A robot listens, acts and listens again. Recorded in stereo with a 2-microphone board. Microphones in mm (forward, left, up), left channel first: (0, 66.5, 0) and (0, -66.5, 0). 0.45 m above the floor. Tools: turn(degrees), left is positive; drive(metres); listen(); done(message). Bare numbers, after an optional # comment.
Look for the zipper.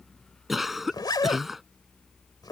# The zipper: about 30° left or 150° left.
turn(30)
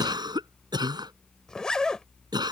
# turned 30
done("Found it: a zipper, straight ahead.")